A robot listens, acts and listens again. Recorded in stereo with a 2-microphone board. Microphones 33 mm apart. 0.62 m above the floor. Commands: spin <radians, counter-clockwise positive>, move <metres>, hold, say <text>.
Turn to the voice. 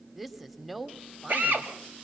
spin -0.52
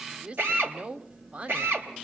spin -2.44
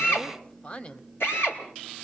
spin 0.70
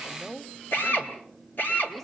spin 0.17
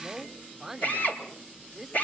say Found it: a woman speaking, straight ahead, 1 to 2 m away.